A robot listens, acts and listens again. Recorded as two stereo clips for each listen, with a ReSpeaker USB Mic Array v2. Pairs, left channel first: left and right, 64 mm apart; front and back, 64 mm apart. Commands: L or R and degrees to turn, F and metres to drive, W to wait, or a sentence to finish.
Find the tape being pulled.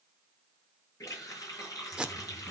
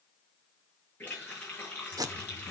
R165
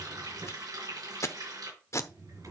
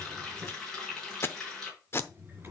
L50
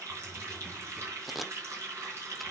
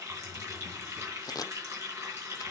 Facing the tape being pulled.